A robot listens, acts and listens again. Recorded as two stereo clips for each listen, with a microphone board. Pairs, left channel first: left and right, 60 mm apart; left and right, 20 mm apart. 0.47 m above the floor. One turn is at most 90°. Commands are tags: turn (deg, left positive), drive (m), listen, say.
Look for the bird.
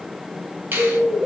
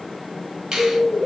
<turn deg="30"/>
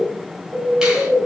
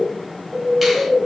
<turn deg="-20"/>
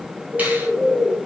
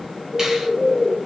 <say>Facing the bird.</say>